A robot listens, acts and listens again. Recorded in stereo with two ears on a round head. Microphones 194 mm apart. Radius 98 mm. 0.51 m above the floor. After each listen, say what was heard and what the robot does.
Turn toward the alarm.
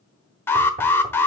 Turn 30° left.
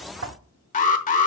So it is at 140° left. Turn 140° left.
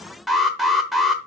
Found it: an alarm, straight ahead.